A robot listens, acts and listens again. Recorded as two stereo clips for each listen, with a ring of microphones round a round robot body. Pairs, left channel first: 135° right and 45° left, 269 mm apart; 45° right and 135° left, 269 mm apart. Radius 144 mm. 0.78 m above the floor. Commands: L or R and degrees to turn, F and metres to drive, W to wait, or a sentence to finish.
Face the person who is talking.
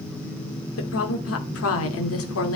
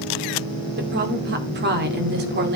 R170
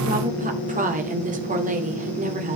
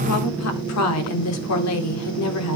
R15
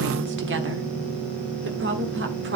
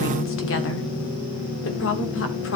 Facing the woman speaking, 2 to 4 m away.